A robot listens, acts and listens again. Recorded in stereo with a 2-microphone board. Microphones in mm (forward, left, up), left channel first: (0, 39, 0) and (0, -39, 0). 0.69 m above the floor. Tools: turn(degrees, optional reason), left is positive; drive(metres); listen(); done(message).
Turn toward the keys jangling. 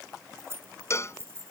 turn(degrees=-35, reason="The keys jangling: about 35° right or 145° right.")
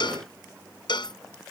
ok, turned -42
listen()
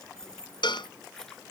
done("Found it: keys jangling, straight ahead.")